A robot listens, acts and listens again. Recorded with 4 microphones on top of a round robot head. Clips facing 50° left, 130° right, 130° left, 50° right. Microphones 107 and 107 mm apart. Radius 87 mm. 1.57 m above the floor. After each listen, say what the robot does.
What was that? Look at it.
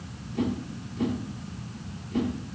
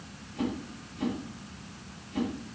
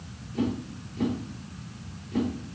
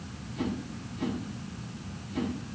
Turn 90° left.
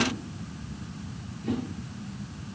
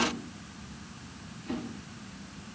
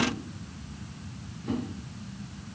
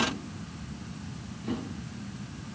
Keep listening.
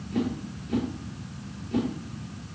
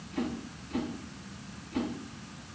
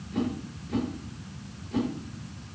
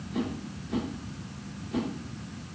Turn 35° left.
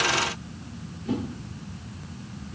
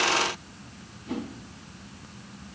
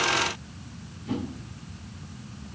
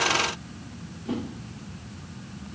Facing the whoosh, 2 to 4 m away.